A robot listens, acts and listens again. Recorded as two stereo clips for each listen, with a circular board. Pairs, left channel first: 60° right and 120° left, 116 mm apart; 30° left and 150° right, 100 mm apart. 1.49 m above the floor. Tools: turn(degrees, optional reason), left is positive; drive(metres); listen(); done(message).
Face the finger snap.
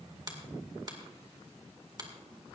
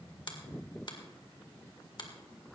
turn(degrees=70, reason="The finger snap: 70° left.")
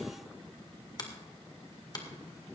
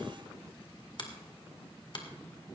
done("Facing the finger snap, 2 to 4 m away.")